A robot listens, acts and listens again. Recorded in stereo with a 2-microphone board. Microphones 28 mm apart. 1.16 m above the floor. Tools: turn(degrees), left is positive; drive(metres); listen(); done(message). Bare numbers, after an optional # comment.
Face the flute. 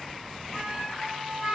# The flute: about 25° right or 155° right.
turn(-25)
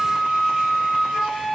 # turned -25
done("Found it: a flute, straight ahead, 1 to 2 m away.")